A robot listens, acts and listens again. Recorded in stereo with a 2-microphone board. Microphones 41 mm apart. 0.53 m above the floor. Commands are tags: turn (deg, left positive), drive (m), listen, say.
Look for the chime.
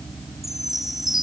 <turn deg="-30"/>
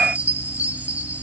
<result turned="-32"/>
<turn deg="-140"/>
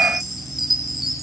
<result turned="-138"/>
<say>Found it: a chime, straight ahead.</say>